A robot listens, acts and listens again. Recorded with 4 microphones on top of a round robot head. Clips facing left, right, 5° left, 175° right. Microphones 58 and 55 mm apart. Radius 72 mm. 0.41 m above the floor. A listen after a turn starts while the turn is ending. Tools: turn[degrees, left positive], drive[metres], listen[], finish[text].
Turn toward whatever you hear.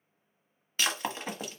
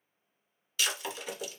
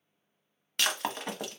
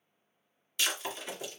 Thought: The breaking glass: 40° left.
Action: turn[40]
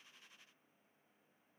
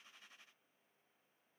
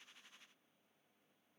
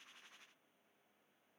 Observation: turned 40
Action: finish[Facing where the breaking glass came from. I can't hear it now.]